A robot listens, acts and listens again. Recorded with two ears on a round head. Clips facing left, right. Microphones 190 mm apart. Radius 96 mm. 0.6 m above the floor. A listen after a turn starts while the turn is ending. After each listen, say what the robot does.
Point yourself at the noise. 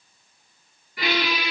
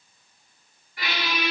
Turn 65° left.
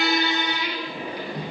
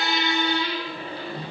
Turn 15° left.
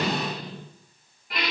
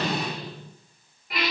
Found it: a squeak, straight ahead, 1 to 2 m away.